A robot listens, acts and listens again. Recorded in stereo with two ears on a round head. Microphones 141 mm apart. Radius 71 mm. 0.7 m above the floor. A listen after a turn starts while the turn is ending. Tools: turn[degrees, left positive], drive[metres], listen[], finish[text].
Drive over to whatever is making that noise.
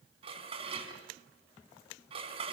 Thought: The dishes clattering: about 35° right or 145° right.
Action: turn[-35]
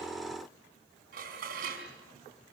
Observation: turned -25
Thought: So it is at 120° right.
Action: turn[-120]
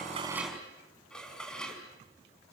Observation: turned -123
Action: drive[1.0]
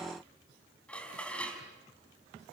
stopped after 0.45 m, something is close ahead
Action: finish[Something is in my way. I am facing the dishes clattering but have not reached it.]